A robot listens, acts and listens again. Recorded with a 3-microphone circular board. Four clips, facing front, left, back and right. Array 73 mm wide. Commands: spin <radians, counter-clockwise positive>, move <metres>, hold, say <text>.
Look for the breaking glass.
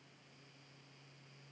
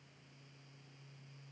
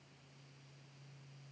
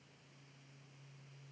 hold
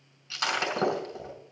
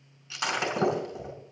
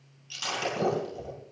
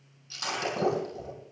spin 0.79
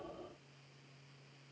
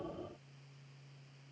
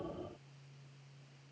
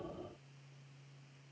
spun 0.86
say I heard breaking glass from this way, but can't make it out now.